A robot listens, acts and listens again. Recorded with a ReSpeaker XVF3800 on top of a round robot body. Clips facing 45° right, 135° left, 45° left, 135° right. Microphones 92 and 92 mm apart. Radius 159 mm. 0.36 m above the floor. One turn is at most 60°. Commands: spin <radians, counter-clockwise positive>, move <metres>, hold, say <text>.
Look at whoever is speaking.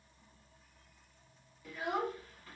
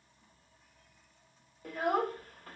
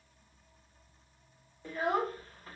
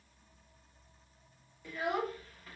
spin 1.05
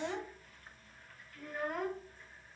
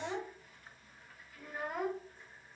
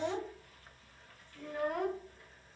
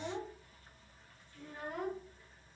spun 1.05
spin 0.87
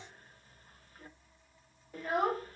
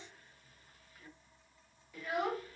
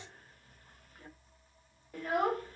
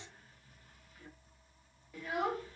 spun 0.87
say Facing the child speaking, under 1 m away.